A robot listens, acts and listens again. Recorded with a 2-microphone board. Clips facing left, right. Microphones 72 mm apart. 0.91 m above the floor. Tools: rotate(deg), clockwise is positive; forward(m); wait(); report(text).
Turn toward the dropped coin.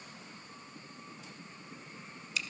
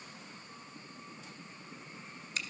wait()
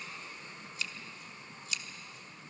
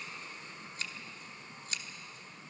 wait()
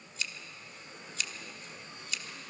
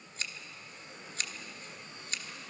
report("I can't make out a dropped coin to turn to.")